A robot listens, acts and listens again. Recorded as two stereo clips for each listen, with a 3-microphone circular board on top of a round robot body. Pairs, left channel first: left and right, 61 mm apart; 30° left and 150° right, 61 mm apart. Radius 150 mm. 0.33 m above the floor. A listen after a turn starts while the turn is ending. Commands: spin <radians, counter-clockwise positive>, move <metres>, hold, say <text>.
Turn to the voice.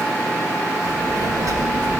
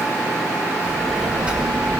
spin -1.40
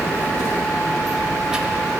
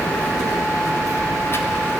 spin -0.26
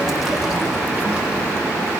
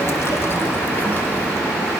spin -0.35
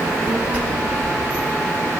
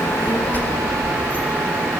spin -0.61
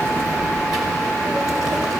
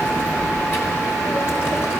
spin -0.17
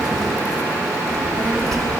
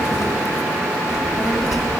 say Facing the child speaking, 1 to 2 m away.